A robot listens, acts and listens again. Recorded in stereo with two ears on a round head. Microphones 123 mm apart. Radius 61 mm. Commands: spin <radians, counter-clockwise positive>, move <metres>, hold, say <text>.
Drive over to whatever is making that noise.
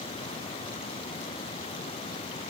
hold
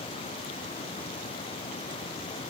hold
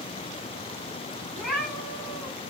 spin 0.52
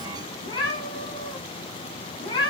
spin 2.53
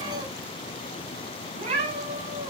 spin -0.79
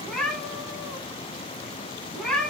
move 1.0
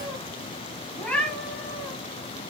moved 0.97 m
spin 0.17
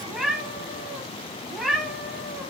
move 1.0
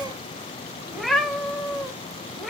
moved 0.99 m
move 1.0
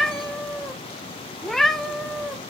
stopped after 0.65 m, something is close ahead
say Arrived at the cat meowing, straight ahead.